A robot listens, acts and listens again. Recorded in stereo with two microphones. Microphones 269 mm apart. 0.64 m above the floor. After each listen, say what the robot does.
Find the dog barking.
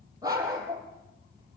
Turn 30° right.
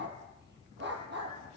Turn 140° right.
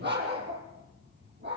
Turn 40° right.
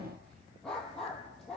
Found it: a dog barking, straight ahead, over 4 m away.